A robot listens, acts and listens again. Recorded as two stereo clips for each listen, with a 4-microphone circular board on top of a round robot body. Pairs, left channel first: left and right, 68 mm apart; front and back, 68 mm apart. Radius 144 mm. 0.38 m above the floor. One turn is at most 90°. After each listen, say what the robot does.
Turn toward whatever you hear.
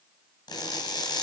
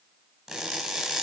Turn 90° left.
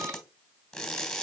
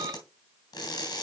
Facing the crushing, 2 to 4 m away.